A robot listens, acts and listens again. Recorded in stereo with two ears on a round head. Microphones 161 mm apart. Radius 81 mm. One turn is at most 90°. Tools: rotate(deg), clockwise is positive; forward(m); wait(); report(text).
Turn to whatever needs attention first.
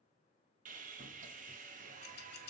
wait()
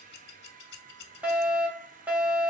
rotate(30)
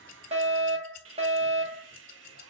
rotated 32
rotate(90)
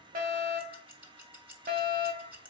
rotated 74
rotate(65)
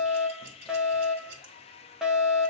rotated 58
report("Facing the fire alarm, 1 to 2 m away.")